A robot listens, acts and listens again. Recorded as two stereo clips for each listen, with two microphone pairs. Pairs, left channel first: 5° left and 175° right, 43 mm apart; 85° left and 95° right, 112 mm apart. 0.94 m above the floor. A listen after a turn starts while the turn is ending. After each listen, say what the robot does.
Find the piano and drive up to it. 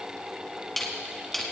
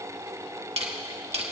Keep listening.
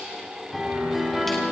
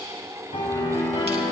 Turn 95° left.
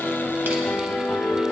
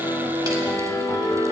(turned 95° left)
Turn 25° left.
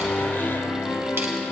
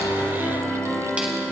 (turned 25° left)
Drive 1.0 m forward.
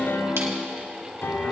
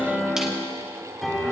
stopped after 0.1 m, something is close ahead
Blocked. The piano is further on, straight ahead.